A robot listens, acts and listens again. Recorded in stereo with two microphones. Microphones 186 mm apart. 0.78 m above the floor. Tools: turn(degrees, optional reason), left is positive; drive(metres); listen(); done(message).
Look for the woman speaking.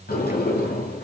listen()
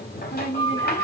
turn(degrees=90)
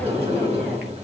listen()
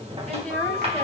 done("Found it: a woman speaking, straight ahead, over 4 m away.")